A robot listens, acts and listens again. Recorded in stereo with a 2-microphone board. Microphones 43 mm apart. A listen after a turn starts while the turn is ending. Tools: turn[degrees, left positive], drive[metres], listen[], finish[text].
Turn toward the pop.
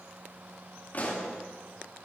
Thought: The pop: about 40° left or 140° left.
Action: turn[40]
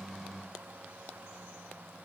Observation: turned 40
Action: listen[]
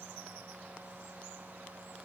Action: finish[I heard a pop, but can't make it out now. It was about straight ahead or 100° left.]